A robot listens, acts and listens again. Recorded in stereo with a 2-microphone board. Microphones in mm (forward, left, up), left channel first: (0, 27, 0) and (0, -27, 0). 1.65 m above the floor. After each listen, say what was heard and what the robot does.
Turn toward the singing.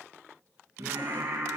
The singing: about 70° right or 110° right. Turn 70° right.
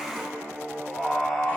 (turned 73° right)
Found it: singing, straight ahead, 2 to 4 m away.